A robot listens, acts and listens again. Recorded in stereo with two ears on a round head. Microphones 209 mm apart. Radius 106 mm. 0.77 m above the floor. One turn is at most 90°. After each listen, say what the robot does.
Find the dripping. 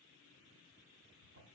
Keep listening.
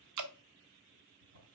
Turn 90° right.
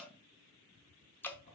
Turn 10° left.
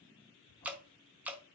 Found it: dripping, straight ahead, under 1 m away.